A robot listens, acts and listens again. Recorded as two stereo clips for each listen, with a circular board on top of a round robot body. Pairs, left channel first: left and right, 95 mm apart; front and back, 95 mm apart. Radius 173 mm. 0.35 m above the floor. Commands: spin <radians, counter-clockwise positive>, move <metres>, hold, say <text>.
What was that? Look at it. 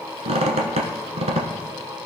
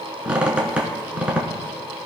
spin -1.75
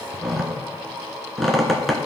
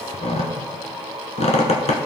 say Facing the squeak.